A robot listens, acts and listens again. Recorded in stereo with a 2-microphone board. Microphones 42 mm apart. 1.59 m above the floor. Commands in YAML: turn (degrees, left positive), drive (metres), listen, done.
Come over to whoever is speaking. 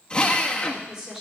turn: -30
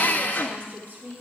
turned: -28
turn: -140
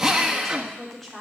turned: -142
drive: 1.0
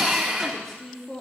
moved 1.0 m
drive: 1.0
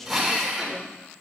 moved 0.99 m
drive: 1.0
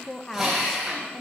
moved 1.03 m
turn: 10
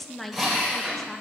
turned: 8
drive: 1.0
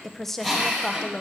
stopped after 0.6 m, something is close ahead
done: "I am next to the woman speaking."